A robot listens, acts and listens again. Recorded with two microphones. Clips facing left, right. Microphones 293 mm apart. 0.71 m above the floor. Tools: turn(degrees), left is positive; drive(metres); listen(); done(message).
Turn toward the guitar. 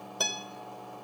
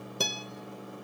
turn(degrees=-30)
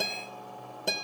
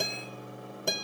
done("Found it: a guitar, straight ahead, 1 to 2 m away.")